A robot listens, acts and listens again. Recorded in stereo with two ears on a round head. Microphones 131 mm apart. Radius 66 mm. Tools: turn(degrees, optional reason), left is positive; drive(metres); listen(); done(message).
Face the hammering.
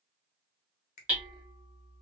turn(degrees=-30)
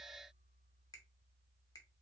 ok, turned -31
listen()
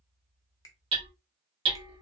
turn(degrees=-140, reason="So it is at 140° right.")
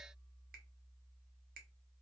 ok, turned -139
listen()
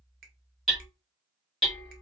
done("Found it: hammering, straight ahead, 2 to 4 m away.")